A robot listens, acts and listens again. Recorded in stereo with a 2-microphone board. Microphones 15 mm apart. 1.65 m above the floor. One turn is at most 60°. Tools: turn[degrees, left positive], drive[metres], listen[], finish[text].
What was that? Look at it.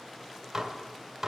Thought: The dishes clattering: about 25° right or 155° right.
Action: turn[-25]
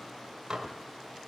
Thought: So it is at 125° right.
Action: turn[-60]
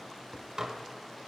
Thought: The dishes clattering is now 55° right.
Action: turn[-55]
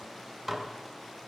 Thought: The dishes clattering is now 30° right.
Action: turn[-30]
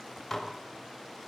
Thought: The dishes clattering is now 10° left.
Action: turn[10]
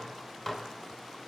Action: finish[Found it: dishes clattering, straight ahead, 1 to 2 m away.]